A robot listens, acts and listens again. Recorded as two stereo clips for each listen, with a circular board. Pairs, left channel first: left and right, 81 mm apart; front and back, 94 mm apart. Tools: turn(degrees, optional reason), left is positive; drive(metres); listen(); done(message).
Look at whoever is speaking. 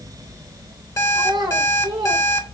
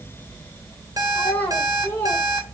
turn(degrees=-70, reason="The child speaking: 70° right.")
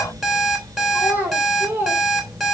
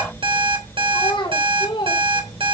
turn(degrees=-25, reason="The child speaking is now 25° right.")
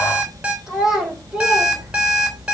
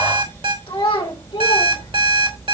turn(degrees=-10, reason="The child speaking is now 10° right.")
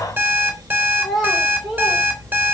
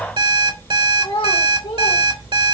done("Found it: a child speaking, straight ahead, 2 to 4 m away.")